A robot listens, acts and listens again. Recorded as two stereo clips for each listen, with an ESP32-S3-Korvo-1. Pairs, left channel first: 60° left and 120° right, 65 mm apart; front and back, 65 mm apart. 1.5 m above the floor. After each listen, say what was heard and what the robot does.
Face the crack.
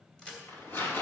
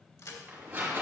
The crack: 15° right. Turn 15° right.
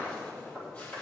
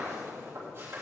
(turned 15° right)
I heard a crack from this way, but can't make it out now.